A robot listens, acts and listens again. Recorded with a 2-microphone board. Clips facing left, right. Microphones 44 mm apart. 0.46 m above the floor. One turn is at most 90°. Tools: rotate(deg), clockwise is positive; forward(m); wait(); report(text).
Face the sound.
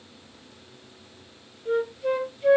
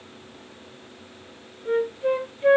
rotate(35)
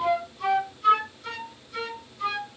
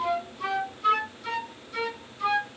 report("Found it: a flute, straight ahead, under 1 m away.")